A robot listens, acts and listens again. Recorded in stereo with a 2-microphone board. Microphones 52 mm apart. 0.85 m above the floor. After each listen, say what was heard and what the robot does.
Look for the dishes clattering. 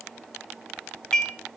Turn 30° left.
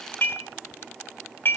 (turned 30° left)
So it is at 135° left. Turn 135° left.
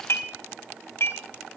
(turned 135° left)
The dishes clattering is now 50° left. Turn 50° left.
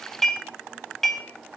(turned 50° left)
Found it: dishes clattering, straight ahead, 2 to 4 m away.